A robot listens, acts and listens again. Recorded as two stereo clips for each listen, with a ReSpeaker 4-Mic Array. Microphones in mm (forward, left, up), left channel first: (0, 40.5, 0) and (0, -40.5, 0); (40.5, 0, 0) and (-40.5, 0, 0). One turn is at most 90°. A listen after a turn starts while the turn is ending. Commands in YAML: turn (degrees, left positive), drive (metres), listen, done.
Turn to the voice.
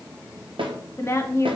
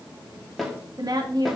turn: 90
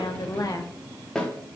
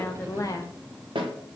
turn: 45
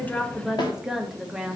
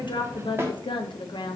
done: "Found it: a woman speaking, straight ahead, under 1 m away."